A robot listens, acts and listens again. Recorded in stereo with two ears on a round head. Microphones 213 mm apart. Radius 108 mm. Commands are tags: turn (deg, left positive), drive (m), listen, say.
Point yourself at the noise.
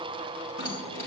<turn deg="-25"/>
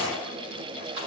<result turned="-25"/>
<turn deg="-125"/>
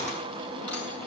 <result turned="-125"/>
<say>Found it: keys jangling, straight ahead, over 4 m away.</say>